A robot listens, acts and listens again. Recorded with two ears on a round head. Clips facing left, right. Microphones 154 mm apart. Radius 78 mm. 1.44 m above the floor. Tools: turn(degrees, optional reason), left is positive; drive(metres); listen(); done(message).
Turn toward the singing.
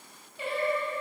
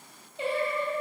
turn(degrees=-25, reason="The singing: about 25° right or 155° right.")
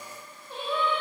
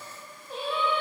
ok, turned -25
turn(degrees=-10, reason="So it is at 10° right.")
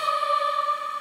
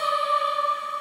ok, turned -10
done("Facing the singing, 2 to 4 m away.")